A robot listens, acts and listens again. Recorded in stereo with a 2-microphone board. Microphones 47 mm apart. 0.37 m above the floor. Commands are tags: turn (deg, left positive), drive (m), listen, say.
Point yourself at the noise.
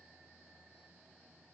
<listen/>
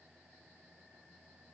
<listen/>
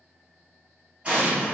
<turn deg="-25"/>
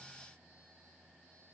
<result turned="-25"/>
<listen/>
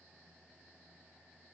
<say>I heard an explosion, but can't make it out now. It was about straight ahead or 130° right.</say>